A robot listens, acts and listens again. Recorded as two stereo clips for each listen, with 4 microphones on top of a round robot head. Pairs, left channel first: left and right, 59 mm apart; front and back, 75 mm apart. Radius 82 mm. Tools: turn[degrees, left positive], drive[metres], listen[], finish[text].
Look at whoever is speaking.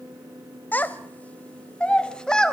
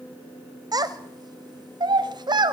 Thought: The child speaking: 170° left.
Action: turn[170]
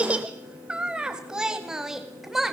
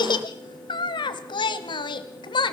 Action: finish[Facing the child speaking.]